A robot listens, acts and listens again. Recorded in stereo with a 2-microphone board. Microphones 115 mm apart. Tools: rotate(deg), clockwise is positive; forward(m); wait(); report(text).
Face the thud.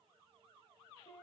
wait()
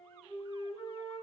wait()
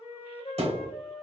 rotate(65)
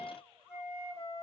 wait()
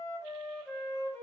report("I heard a thud, but can't make it out now. It was about straight ahead or 50° right.")